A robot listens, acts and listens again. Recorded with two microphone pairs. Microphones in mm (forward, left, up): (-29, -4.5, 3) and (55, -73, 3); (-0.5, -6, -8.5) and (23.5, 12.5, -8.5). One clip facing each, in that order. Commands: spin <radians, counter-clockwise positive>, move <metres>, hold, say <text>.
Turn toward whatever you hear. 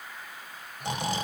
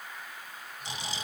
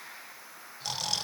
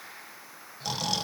spin 2.09
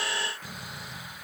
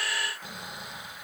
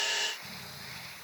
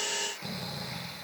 spin 0.35
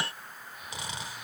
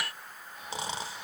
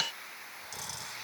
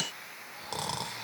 spin 0.17
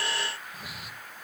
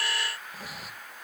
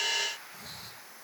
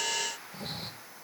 say Found it: snoring, straight ahead, 1 to 2 m away.